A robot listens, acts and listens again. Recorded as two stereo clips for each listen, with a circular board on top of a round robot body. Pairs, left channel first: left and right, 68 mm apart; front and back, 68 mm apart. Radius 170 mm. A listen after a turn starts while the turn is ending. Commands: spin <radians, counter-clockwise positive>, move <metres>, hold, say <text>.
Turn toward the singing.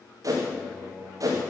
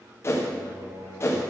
spin 3.14
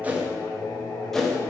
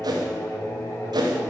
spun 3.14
spin 0.79
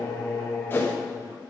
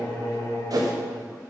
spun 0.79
spin 0.35
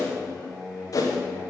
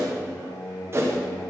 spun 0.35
say Found it: singing, straight ahead, 2 to 4 m away.